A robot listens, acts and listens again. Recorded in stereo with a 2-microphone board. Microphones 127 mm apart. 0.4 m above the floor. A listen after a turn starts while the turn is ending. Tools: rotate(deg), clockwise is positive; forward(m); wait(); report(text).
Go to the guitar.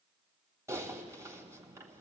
wait()
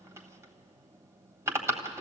wait()
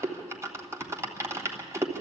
report("I can't make out a guitar to turn to.")